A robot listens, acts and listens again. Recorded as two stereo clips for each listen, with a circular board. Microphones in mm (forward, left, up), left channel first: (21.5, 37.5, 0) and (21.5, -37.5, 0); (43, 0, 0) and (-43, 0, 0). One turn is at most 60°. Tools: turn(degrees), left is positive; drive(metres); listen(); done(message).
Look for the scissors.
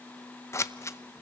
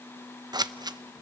turn(degrees=60)
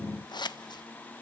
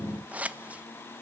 turn(degrees=60)
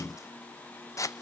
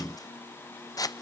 turn(degrees=45)
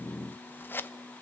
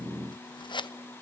turn(degrees=30)
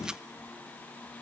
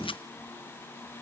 listen()
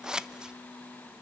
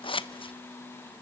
turn(degrees=-10)
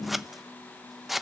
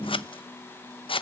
done("Facing the scissors, under 1 m away.")